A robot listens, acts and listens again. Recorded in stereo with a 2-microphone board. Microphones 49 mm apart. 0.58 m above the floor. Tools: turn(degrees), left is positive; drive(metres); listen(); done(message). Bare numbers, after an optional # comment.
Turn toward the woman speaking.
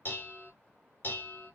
listen()
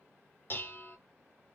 listen()
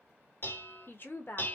# The woman speaking: about 45° left or 135° left.
turn(45)
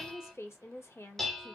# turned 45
# So it is at 85° left.
turn(85)
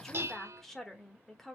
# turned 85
done("Facing the woman speaking.")